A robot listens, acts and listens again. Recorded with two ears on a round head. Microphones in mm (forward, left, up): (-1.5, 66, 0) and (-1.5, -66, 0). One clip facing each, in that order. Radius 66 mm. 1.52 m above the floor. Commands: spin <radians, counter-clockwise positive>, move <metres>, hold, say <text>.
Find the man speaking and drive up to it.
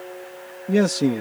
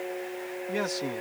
spin 1.05
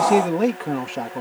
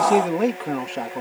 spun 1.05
move 1.0
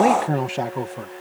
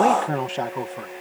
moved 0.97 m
spin 0.17
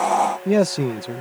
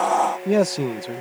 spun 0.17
move 1.0
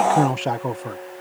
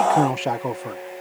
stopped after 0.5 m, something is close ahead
say Arrived at the man speaking, straight ahead.